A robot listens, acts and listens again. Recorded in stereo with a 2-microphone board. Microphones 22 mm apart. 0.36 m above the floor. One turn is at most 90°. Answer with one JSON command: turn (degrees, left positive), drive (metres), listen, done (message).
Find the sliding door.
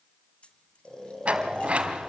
{"turn": -65}
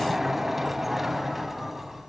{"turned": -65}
{"turn": -10}
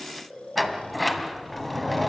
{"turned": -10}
{"done": "Found it: a sliding door, straight ahead, 2 to 4 m away."}